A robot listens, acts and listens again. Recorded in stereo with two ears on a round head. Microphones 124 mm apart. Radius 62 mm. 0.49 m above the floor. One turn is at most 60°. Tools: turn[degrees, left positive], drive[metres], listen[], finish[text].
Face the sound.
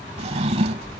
Thought: The drawer: about 45° right or 135° right.
Action: turn[-45]
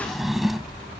Action: finish[Found it: a drawer, straight ahead.]